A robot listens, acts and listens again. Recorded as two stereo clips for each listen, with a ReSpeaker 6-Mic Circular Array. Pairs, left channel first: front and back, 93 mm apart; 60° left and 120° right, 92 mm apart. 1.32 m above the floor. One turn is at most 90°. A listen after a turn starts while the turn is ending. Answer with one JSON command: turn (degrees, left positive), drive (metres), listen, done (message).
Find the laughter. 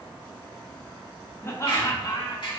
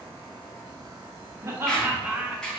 {"turn": -40}
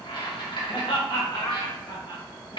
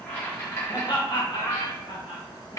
{"turn": 45}
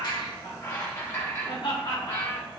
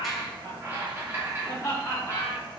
{"done": "Found it: laughter, straight ahead."}